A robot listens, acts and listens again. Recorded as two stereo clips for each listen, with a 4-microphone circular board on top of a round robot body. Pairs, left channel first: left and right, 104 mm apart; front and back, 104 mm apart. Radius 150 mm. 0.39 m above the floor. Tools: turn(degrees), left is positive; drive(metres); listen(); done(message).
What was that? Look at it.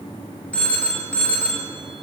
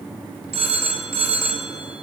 turn(degrees=170)
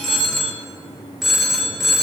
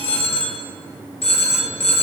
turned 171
done("Found it: a phone ringing, straight ahead, 1 to 2 m away.")